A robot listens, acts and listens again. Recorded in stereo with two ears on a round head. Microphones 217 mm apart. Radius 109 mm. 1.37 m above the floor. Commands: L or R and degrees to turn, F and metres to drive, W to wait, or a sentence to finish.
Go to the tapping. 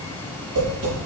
R55
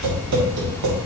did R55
R70
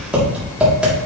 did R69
F1.0
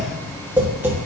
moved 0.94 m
R10
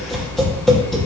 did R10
F1.0
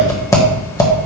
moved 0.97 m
L15
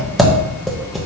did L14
F1.0
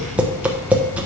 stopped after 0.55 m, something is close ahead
Arrived at the tapping, straight ahead.